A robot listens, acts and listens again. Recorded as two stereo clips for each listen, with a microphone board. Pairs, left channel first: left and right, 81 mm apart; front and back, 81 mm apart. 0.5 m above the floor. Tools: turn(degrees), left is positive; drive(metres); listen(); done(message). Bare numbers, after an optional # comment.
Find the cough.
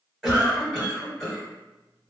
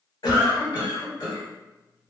done("Facing the cough, 1 to 2 m away.")